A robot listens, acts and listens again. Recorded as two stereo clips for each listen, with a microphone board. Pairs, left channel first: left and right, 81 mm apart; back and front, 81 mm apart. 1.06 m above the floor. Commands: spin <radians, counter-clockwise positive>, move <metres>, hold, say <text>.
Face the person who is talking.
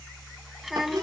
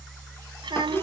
say Found it: a child speaking, straight ahead.